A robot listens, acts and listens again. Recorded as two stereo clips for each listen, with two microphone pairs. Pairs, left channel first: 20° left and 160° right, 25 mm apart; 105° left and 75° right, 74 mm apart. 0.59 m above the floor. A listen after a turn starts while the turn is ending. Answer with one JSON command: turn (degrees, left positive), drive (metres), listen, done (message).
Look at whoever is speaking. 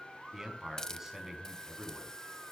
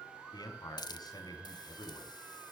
{"turn": 125}
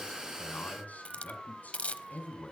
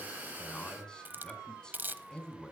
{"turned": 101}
{"turn": 25}
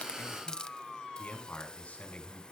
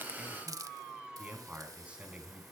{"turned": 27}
{"done": "Found it: a man speaking, straight ahead, over 4 m away."}